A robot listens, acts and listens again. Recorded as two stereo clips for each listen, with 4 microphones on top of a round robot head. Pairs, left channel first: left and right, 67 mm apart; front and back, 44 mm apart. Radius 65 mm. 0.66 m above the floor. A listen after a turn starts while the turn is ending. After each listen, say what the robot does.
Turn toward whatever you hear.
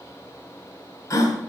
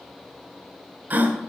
Turn 135° left.
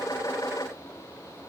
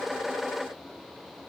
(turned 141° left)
Facing where the gasp came from. I can't hear it now.